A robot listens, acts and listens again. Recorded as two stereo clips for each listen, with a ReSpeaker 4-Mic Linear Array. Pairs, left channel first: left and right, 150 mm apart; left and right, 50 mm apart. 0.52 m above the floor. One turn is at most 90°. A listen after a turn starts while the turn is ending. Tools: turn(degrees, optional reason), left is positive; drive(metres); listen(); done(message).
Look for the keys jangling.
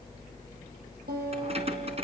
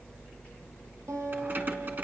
turn(degrees=-40, reason="The keys jangling: about 40° right or 140° right.")
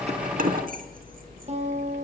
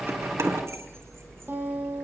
turn(degrees=-90, reason="So it is at 105° right.")
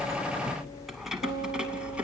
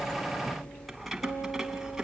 turn(degrees=-10, reason="The keys jangling is now 10° right.")
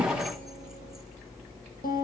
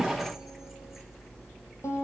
listen()
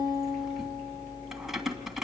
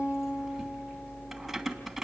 done("Found it: keys jangling, straight ahead.")